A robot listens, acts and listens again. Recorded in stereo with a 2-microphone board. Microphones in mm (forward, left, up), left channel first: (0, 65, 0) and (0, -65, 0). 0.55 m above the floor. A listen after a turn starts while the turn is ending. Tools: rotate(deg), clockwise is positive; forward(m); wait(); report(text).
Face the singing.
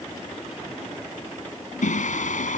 rotate(-90)
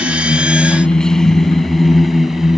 report("Found it: singing, straight ahead.")